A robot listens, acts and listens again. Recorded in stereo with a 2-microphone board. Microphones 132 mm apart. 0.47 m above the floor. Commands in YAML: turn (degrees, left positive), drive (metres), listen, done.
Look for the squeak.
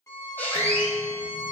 turn: 30
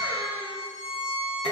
turn: 135
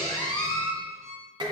turn: 35
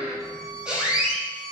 done: "Facing the squeak, 2 to 4 m away."